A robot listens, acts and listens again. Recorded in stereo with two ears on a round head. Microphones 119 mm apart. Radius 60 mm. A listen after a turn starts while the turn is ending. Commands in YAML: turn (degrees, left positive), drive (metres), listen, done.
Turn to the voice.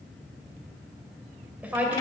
turn: -30
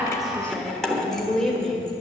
turn: 30
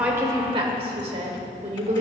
turn: -50
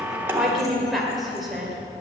done: "Found it: a woman speaking, straight ahead."